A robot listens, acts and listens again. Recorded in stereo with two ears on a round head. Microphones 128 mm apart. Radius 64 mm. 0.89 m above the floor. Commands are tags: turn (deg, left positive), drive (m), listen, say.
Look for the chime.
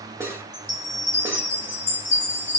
<turn deg="15"/>
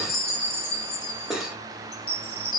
<say>Facing the chime.</say>